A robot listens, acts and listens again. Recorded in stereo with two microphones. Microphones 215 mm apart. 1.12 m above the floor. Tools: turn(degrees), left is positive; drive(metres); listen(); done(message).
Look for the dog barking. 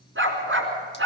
turn(degrees=-90)
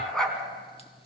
done("Facing the dog barking.")